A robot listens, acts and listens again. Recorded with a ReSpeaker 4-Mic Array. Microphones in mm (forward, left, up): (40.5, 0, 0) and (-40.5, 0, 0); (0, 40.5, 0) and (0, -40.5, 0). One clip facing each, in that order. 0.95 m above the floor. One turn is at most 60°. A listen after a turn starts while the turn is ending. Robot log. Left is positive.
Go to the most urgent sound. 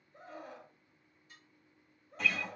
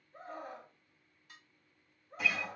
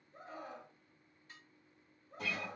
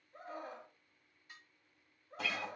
note: The scream: 135° right.
cmd yaw -60
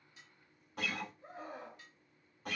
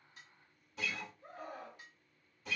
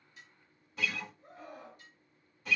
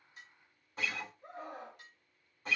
note: The scream is now 70° right.
cmd yaw -60
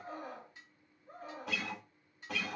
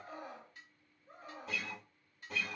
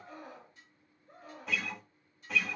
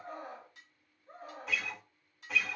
note: The scream is now 35° right.
cmd yaw -35
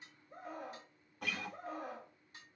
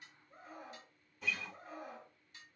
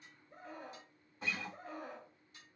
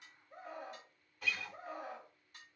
note: The scream is now 10° right.
cmd yaw -10
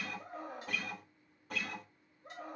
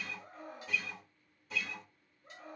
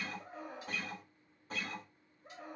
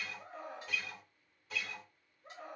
cmd fwd 1.0
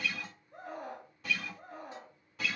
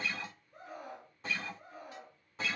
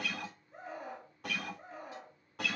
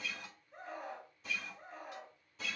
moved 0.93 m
cmd fwd 1.0
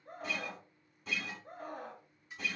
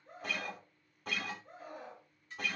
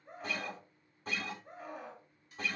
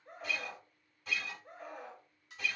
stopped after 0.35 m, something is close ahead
end: Arrived at the scream, straight ahead.